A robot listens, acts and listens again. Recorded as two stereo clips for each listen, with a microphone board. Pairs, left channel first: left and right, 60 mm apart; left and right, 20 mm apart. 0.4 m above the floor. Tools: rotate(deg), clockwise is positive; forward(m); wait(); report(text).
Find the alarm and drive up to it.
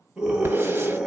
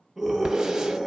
wait()
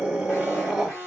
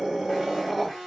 rotate(-25)
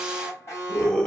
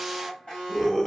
rotate(-125)
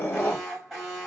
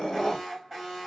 forward(1.0)
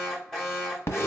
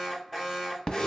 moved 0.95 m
forward(1.0)
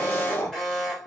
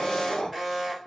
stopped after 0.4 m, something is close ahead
report("I am next to the alarm.")